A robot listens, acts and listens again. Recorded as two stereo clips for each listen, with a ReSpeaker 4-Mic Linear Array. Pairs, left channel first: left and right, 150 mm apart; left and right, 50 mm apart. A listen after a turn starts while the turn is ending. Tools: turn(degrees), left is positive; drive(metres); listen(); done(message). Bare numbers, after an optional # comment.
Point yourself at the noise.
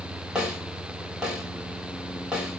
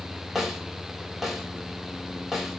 turn(-30)
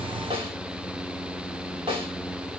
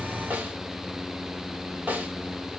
# So it is at 145° right.
turn(-145)
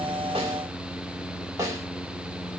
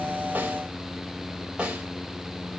# The snare drum is now 20° right.
turn(-20)
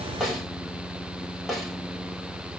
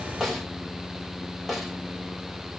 done("Facing the snare drum.")